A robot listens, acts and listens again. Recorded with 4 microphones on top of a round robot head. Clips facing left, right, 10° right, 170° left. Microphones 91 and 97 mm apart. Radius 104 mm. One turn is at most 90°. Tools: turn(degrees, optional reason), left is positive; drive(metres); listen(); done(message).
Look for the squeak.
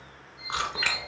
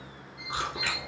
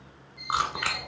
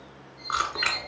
turn(degrees=-45, reason="The squeak: 45° right.")
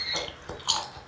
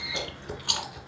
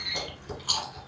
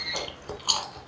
turn(degrees=25, reason="The squeak is now 25° left.")
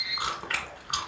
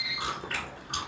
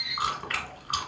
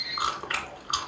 turn(degrees=-15, reason="The squeak is now 15° right.")
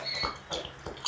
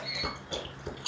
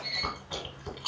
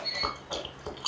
done("Found it: a squeak, straight ahead.")